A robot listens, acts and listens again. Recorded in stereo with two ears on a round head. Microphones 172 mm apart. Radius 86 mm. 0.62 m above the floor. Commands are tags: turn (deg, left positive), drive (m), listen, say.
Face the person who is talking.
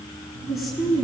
<turn deg="30"/>
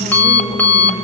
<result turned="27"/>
<listen/>
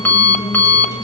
<listen/>
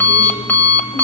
<say>I heard a woman speaking, but can't make it out now. It was about 25° right or 155° left.</say>